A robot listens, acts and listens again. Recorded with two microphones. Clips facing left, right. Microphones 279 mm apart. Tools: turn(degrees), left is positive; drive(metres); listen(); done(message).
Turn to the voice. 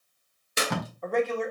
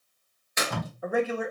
turn(degrees=-30)
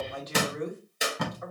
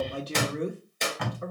turn(degrees=-140)
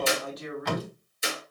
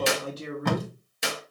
turn(degrees=-35)
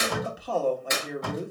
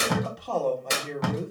turn(degrees=10)
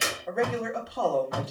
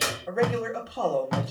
done("Found it: a man speaking, straight ahead, 1 to 2 m away.")